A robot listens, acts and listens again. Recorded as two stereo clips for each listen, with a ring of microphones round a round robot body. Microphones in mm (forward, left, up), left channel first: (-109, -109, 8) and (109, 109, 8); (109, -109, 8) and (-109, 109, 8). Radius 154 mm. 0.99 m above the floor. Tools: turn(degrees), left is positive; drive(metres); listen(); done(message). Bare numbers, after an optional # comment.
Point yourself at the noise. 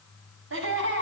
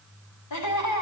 # The laughter: 10° right.
turn(-10)
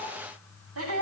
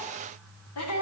done("Found it: laughter, straight ahead, over 4 m away.")